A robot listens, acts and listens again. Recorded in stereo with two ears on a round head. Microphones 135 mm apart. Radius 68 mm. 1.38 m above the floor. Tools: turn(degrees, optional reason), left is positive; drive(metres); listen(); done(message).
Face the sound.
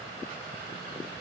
listen()
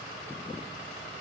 listen()
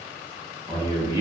turn(degrees=-20, reason="The man speaking: about 20° right or 160° right.")
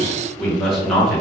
done("Found it: a man speaking, straight ahead.")